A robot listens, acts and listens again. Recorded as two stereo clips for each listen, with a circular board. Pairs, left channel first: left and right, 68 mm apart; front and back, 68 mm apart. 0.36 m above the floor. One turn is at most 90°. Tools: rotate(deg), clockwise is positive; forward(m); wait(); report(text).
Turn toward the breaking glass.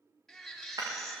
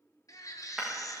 rotate(90)
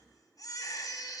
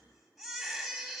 rotate(10)
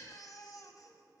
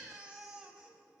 report("I heard breaking glass from this way, but can't make it out now.")